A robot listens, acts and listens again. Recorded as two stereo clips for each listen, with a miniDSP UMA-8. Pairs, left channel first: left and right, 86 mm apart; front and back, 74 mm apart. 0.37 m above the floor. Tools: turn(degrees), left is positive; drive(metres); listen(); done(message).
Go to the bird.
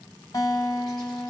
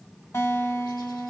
listen()
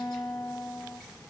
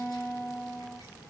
listen()
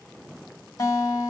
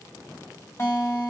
done("I can't make out a bird to turn to.")